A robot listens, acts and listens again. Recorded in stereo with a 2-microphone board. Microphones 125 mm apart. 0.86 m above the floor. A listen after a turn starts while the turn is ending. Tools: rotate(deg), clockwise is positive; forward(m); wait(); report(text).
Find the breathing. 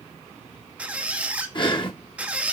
rotate(-40)
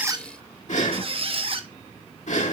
rotate(-100)
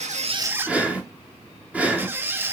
rotate(10)
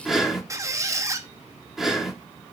report("Facing the breathing, 1 to 2 m away.")